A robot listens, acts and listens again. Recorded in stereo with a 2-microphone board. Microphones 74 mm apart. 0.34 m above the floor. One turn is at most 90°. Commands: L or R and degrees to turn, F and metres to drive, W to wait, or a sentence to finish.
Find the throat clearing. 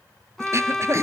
R35
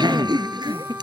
R90
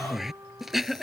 Found it: throat clearing, straight ahead.